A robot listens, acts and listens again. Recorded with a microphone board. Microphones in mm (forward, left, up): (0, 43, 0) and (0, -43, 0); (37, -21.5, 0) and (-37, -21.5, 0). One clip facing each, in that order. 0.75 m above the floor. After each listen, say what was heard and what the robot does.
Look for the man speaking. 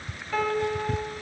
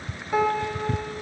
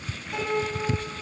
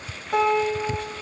Keep listening.
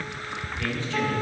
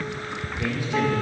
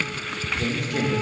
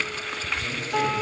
The man speaking: 15° right. Turn 15° right.
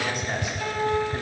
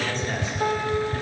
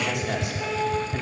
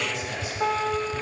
The man speaking is now 20° left. Turn 20° left.
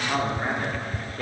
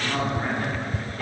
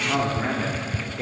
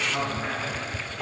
The man speaking is now 45° left. Turn 45° left.
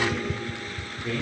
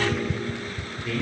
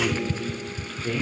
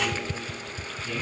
The man speaking is now 30° left. Turn 30° left.
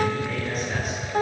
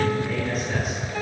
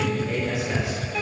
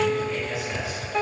Facing the man speaking.